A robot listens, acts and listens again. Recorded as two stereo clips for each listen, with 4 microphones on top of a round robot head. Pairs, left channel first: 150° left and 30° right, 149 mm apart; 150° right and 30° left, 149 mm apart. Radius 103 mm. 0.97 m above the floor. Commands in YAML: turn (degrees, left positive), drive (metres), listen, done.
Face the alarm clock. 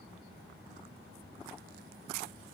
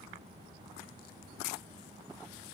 listen: true
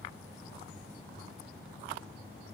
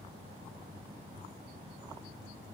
listen: true
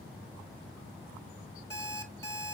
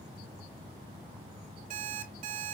turn: 80
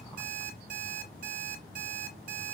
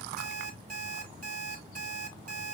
done: "Facing the alarm clock, 2 to 4 m away."